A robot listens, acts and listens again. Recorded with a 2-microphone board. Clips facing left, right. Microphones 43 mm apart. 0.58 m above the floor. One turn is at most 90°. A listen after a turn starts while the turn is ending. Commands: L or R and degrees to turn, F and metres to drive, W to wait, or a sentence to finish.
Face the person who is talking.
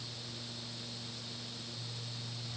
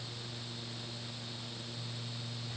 W
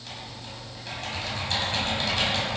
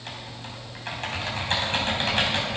W
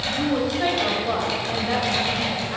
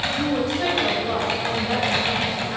L30
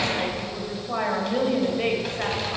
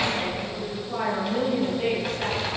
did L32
L90
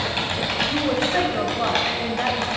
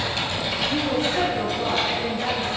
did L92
L45
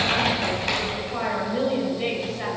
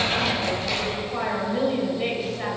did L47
Facing the woman speaking, 2 to 4 m away.